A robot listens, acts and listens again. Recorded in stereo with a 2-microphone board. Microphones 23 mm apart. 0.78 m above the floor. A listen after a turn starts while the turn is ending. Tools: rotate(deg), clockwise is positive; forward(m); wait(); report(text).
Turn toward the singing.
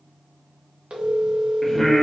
rotate(-30)
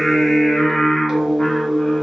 rotate(-145)
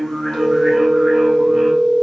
wait()
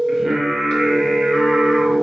rotate(10)
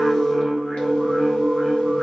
report("Found it: singing, straight ahead, under 1 m away.")